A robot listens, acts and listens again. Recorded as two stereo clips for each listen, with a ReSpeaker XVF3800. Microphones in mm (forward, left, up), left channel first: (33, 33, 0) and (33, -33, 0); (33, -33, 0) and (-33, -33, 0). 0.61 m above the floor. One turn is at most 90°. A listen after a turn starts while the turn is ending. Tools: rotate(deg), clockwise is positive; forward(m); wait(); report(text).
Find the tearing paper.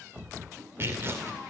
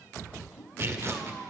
rotate(90)
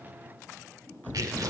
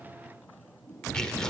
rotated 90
rotate(80)
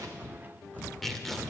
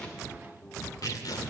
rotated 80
report("Found it: tearing paper, straight ahead.")